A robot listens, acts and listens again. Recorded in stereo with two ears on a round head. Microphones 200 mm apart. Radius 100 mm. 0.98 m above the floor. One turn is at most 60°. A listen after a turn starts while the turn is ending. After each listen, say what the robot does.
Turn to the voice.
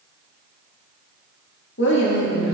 Turn 55° left.
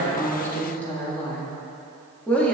Turn 10° left.
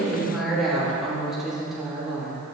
Found it: a woman speaking, straight ahead, 2 to 4 m away.